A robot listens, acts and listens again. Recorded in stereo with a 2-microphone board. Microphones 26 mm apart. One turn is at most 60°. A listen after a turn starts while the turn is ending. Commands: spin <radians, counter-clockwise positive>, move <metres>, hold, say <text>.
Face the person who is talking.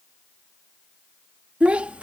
spin -0.87
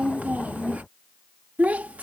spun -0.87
spin -1.05
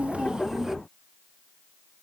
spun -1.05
spin -0.35
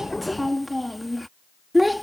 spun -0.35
say Found it: a child speaking, straight ahead.